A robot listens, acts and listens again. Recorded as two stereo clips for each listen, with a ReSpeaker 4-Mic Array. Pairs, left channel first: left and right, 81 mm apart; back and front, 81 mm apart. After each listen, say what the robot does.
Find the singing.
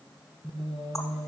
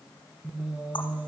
Turn 75° right.
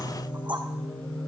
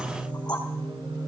Turn 15° left.
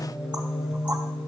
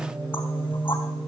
Found it: singing, straight ahead, 2 to 4 m away.